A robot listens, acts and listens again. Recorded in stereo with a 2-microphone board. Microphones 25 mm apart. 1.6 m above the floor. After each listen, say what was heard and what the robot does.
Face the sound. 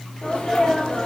The sneeze: about 40° left or 140° left. Turn 40° left.
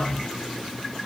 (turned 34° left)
Keep listening.
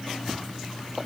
I heard a sneeze, but can't make it out now. It was about 5° left or 110° left.